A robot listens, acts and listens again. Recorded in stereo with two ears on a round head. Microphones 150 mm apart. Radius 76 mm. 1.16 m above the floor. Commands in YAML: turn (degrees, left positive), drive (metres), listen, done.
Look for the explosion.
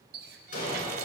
turn: 55
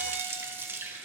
listen: true
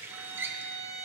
done: "I heard an explosion, but can't make it out now. It was about straight ahead or 70° left."